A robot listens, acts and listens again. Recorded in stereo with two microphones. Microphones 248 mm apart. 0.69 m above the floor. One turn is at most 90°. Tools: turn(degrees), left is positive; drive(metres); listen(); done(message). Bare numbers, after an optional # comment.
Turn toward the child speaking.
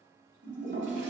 listen()
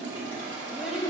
turn(-30)
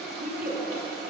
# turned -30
# So it is at 135° right.
turn(-90)
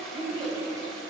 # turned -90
# The child speaking is now 20° right.
turn(-20)
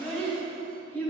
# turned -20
# The child speaking is now 10° left.
turn(10)
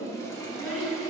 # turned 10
done("Facing the child speaking, 2 to 4 m away.")